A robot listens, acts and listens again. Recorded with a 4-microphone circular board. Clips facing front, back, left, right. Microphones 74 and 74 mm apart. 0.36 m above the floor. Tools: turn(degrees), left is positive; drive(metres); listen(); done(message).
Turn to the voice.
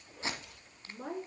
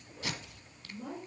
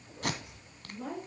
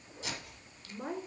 turn(degrees=-30)
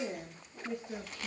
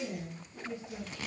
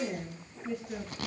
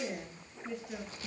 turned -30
done("Facing the woman speaking.")